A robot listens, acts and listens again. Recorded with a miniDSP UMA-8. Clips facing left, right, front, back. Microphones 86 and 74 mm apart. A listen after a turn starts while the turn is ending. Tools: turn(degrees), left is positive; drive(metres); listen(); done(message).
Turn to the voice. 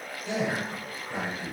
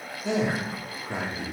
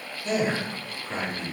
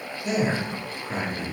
turn(degrees=-95)
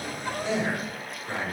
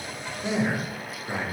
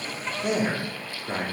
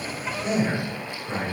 turn(degrees=-15)
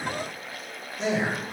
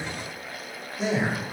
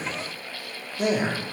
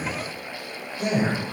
done("Found it: a man speaking, straight ahead.")